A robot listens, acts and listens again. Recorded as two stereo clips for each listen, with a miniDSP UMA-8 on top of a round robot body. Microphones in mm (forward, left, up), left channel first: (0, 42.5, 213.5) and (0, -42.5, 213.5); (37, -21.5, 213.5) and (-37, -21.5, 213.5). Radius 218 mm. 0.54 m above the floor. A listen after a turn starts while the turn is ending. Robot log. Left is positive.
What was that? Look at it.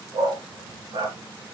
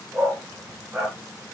note: The dog barking: 110° right.
cmd yaw -110
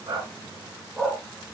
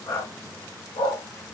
end: Facing the dog barking, 2 to 4 m away.